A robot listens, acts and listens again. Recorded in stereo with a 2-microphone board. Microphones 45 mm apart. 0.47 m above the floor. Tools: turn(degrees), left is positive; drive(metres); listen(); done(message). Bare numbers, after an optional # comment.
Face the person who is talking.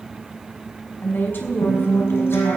# The woman speaking: about 55° left or 125° left.
turn(55)
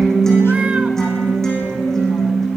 listen()
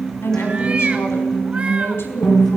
# So it is at 70° left.
turn(70)
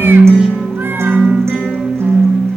listen()
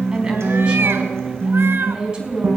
# The woman speaking is now 25° right.
turn(-25)
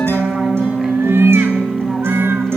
listen()
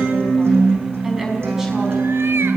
# The woman speaking is now 10° right.
turn(-10)
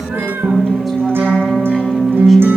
done("Found it: a woman speaking, straight ahead.")